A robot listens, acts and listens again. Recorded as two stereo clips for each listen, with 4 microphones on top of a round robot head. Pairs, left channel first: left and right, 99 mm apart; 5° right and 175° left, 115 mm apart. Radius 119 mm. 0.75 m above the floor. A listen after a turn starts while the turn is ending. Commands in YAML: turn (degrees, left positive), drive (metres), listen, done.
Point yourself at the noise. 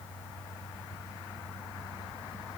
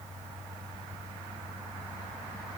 listen: true
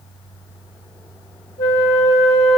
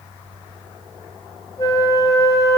turn: 55
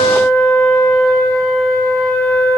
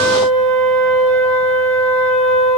turn: 20
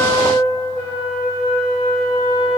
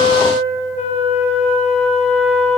done: "Facing the flute, over 4 m away."